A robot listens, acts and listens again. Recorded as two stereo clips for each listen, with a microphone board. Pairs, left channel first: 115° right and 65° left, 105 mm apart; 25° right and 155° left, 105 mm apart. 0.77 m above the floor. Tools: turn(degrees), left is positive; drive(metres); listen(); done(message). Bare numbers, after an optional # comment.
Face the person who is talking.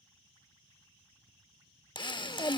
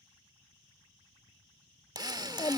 # The child speaking: 60° right.
turn(-60)
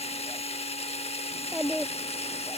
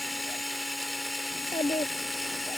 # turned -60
# The child speaking is now 20° right.
turn(-20)
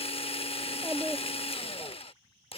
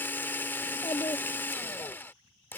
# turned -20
done("Facing the child speaking.")